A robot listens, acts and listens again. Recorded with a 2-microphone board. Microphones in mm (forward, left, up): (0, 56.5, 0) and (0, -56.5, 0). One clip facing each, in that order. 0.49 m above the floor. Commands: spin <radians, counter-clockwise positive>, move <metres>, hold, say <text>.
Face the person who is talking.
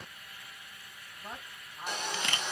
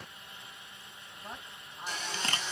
spin 0.52
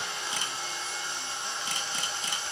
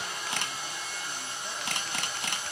hold
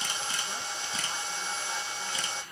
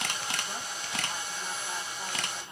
hold
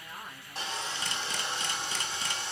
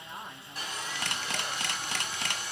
spin -0.52
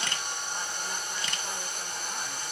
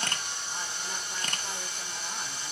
hold
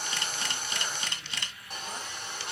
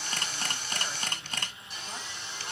hold
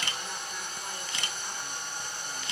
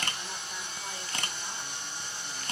say Facing where the woman speaking came from. I can't hear it now.